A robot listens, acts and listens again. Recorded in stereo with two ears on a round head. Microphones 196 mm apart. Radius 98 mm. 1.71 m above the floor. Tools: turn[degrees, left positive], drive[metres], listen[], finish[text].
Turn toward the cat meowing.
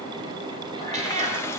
Thought: The cat meowing: about 35° right or 145° right.
Action: turn[-35]
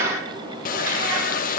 Thought: So it is at 110° right.
Action: turn[-110]
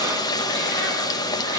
Action: listen[]
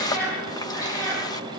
Thought: The cat meowing is now 10° left.
Action: turn[10]
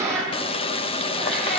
Action: finish[Found it: a cat meowing, straight ahead, over 4 m away.]